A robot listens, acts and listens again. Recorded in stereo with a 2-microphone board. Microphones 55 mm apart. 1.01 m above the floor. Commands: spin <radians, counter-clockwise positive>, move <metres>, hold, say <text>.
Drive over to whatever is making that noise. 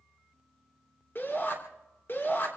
spin 0.79
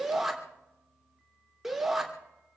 move 1.0
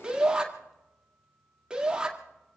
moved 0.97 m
spin -0.26
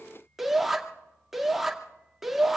move 1.0
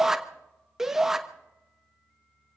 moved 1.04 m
spin -0.17
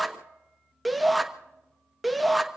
move 1.0
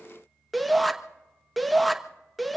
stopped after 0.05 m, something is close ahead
say I am next to the shout.